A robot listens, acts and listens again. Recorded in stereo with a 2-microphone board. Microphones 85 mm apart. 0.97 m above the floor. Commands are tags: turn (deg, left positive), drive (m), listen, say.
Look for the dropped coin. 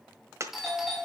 <turn deg="-35"/>
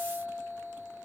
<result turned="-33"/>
<listen/>
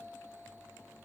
<say>I heard a dropped coin, but can't make it out now. It was about 5° right or 110° right.</say>